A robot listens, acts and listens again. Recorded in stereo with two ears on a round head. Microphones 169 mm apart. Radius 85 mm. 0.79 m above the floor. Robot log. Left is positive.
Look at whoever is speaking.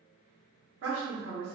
note: The woman speaking: about 70° right or 110° right.
cmd yaw -70
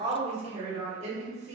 note: So it is at 35° right.
cmd yaw -35
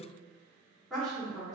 end: Found it: a woman speaking, straight ahead.